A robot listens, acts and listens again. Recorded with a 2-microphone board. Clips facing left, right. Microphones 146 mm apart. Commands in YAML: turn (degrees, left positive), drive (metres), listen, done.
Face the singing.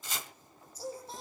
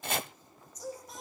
turn: 30
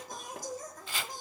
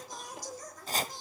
turn: 130
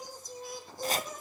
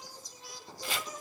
turn: 55
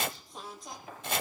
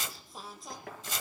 done: "Found it: singing, straight ahead."